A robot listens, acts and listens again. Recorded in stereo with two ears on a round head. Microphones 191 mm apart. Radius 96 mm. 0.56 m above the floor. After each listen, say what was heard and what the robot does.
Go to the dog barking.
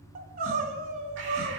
Keep listening.
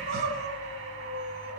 Keep listening.
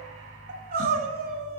I can't make out a dog barking to turn to.